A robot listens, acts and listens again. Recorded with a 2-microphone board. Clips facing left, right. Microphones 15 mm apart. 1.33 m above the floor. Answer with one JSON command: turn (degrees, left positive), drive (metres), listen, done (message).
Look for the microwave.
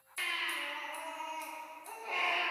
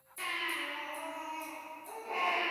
{"listen": true}
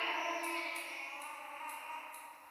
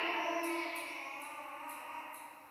{"listen": true}
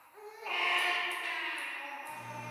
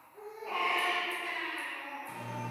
{"turn": -90}
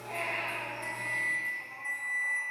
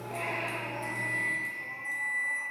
{"turn": 10}
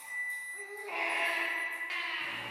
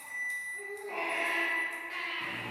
{"done": "Found it: a microwave, straight ahead, 1 to 2 m away."}